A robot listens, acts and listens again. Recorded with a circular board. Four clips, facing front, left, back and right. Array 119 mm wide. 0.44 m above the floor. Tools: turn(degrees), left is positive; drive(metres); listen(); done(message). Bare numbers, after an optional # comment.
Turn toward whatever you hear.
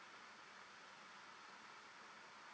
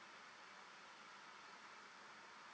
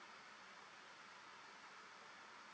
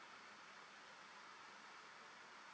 listen()
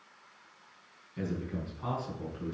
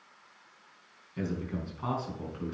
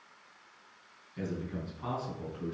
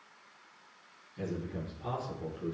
# The man speaking: 90° left.
turn(90)
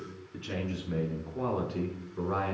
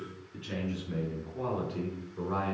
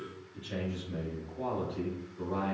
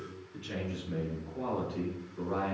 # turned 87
# The man speaking is now 10° left.
turn(10)
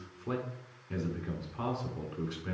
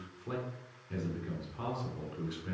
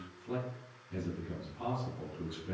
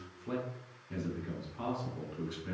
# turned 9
done("Facing the man speaking, over 4 m away.")